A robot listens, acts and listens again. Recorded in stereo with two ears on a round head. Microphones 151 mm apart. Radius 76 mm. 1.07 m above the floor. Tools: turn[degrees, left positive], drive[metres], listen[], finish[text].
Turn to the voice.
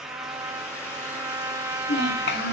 Thought: The child speaking: about 65° left or 115° left.
Action: turn[65]
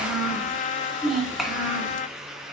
Action: finish[Found it: a child speaking, straight ahead.]